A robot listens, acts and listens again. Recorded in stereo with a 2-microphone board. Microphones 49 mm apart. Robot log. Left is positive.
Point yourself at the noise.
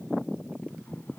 cmd idle
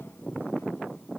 cmd idle
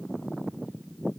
end: I can't make out anything.